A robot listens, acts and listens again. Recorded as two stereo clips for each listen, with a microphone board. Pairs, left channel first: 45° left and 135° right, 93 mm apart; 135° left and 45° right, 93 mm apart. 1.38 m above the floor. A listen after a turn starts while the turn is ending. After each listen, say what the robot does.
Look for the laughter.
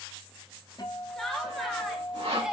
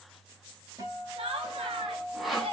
Turn 50° right.
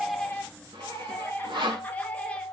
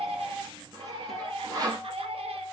Turn 30° right.
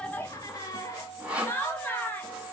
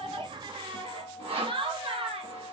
Turn 25° right.
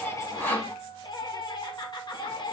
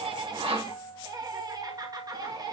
Facing the laughter, 1 to 2 m away.